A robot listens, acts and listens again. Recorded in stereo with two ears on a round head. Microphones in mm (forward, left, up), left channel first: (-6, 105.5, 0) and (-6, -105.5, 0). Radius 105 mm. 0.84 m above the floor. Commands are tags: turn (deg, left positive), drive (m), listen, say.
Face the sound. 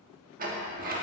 <turn deg="-35"/>
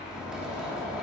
<say>Facing the sliding door.</say>